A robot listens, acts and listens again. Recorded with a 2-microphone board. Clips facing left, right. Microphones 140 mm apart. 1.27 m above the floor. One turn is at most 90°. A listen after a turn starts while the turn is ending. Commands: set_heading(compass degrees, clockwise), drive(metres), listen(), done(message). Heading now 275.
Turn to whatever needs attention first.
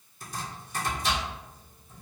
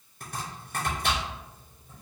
listen()
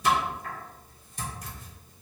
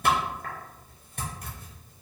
listen()
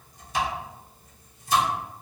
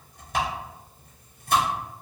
done("I can't make out anything urgent to turn to.")